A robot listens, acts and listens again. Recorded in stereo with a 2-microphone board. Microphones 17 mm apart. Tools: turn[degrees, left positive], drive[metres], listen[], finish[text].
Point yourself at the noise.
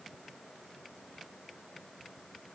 Action: listen[]
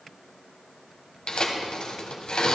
Thought: The tearing paper: about 60° left or 120° left.
Action: turn[60]
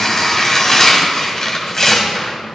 Thought: So it is at 35° left.
Action: turn[35]
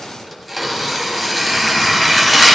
Action: finish[Facing the tearing paper, 1 to 2 m away.]